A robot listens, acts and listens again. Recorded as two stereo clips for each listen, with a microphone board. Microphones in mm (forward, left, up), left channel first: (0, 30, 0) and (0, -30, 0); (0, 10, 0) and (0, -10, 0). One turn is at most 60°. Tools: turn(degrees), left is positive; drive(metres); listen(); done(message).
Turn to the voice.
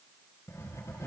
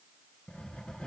listen()
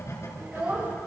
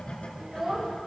turn(degrees=-35)
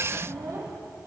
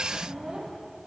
turn(degrees=-60)
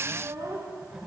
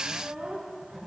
turn(degrees=-60)
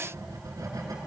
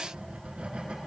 turn(degrees=-20)
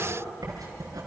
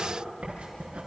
listen()
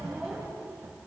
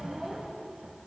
done("I heard a child speaking from this way, but can't make it out now.")